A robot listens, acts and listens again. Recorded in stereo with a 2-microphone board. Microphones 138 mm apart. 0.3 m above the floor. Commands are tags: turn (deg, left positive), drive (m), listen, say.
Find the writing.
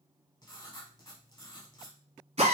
<turn deg="30"/>
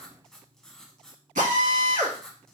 <say>Facing the writing, under 1 m away.</say>